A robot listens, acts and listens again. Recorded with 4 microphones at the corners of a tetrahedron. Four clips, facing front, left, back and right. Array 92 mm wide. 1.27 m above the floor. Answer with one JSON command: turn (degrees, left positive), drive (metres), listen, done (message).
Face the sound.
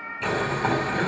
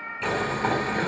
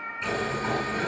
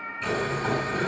{"turn": 50}
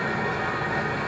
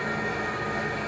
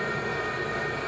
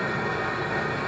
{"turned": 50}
{"turn": -15}
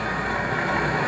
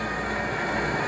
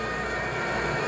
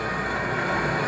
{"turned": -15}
{"done": "Found it: boiling, straight ahead."}